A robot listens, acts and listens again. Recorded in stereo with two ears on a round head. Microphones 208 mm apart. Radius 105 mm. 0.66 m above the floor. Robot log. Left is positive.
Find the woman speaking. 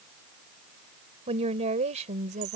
note: The woman speaking: about 30° right or 150° right.
cmd yaw -30
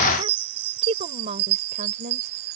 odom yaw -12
note: The woman speaking: about 35° right or 145° right.
cmd yaw -35
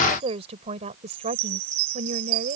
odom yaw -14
note: The woman speaking: about 35° right or 145° right.
cmd yaw -35
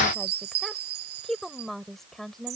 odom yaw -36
end: Facing the woman speaking.